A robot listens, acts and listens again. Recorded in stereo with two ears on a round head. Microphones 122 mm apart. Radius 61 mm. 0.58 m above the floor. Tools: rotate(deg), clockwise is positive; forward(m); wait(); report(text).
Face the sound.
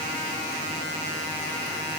wait()
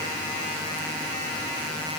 wait()
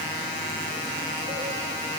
report("I can't make out anything to turn to.")